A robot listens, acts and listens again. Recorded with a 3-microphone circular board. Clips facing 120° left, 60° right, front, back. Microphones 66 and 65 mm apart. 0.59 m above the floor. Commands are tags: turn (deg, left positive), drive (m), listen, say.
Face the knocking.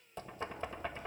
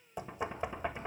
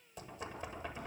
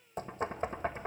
<turn deg="-135"/>
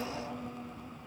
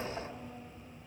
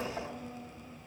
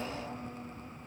<listen/>
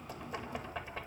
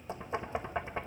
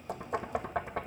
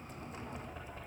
<say>Facing the knocking.</say>